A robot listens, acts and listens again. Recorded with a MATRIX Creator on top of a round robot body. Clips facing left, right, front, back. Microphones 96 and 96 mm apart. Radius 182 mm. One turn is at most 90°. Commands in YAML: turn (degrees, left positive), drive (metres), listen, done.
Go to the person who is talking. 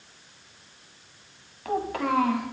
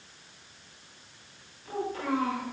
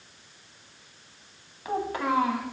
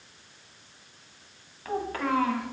turn: 75
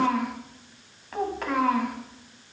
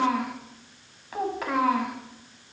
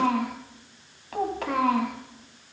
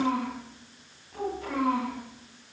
drive: 1.0
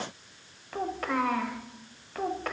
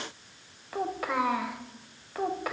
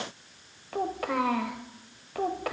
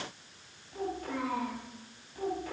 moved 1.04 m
drive: 1.0
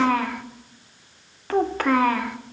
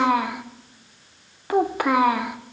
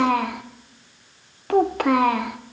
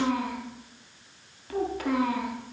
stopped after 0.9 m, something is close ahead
turn: -10
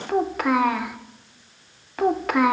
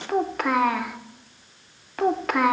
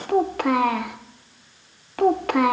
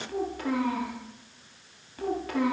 done: "I am next to the child speaking."